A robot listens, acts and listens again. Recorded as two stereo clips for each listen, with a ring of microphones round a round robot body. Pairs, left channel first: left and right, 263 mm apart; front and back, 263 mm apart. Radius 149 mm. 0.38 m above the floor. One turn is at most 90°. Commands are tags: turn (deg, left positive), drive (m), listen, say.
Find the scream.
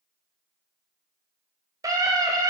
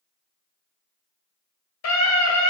<turn deg="-15"/>
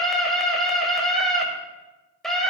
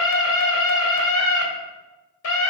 <say>Facing the scream, 2 to 4 m away.</say>